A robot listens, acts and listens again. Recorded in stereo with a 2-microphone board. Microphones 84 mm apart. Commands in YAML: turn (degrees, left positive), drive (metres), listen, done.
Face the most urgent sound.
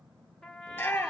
turn: 20
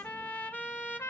listen: true
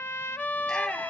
done: "Found it: a shout, straight ahead, 2 to 4 m away."